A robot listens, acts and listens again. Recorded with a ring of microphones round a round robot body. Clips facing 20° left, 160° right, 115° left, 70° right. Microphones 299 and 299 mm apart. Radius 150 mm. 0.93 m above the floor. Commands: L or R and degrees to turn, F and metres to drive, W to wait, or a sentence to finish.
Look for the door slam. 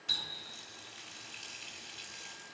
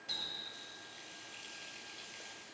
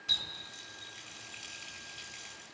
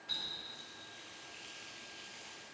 W
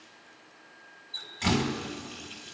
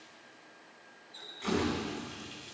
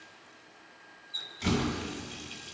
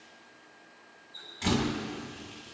L15
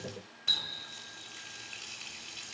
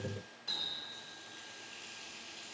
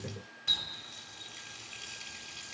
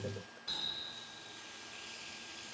Facing where the door slam came from. I can't hear it now.